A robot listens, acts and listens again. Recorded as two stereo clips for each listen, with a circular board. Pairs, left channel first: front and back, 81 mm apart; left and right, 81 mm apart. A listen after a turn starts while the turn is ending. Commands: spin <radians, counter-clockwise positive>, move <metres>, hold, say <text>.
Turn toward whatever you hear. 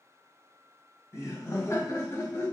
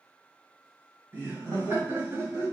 spin -0.87
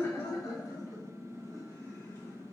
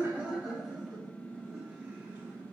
spin -0.61
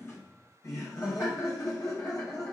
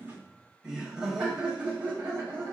spin -0.61
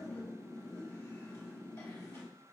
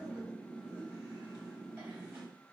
spin -0.35
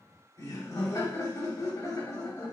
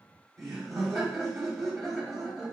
say Found it: laughter, straight ahead.